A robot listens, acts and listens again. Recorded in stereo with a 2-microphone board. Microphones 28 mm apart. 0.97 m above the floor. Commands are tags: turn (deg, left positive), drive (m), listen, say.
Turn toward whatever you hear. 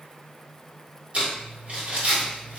<turn deg="-50"/>
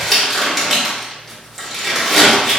<say>Found it: crumpling, straight ahead, 1 to 2 m away.</say>